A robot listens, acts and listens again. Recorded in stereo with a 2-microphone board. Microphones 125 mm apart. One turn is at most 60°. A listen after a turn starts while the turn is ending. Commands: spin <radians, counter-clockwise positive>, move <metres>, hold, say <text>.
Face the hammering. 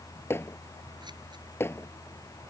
spin 0.35
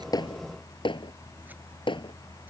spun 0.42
spin 1.05
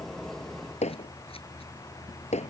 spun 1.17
spin 1.05
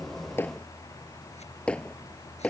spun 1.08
spin 0.17
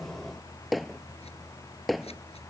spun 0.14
say Facing the hammering.